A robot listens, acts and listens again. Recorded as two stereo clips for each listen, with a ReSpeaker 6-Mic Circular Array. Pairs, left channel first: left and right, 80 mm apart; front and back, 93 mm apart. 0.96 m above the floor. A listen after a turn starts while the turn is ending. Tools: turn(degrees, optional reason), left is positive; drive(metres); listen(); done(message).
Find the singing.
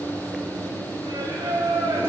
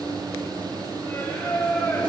turn(degrees=-70, reason="The singing: 70° right.")
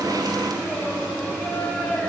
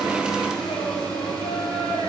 listen()
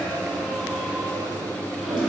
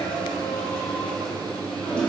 listen()
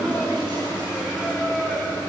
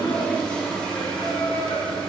done("Facing the singing, over 4 m away.")